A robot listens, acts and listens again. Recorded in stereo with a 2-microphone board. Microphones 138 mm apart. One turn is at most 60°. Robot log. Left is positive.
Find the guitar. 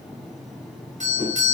cmd idle
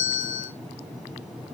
cmd idle
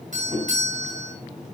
end: I can't make out a guitar to turn to.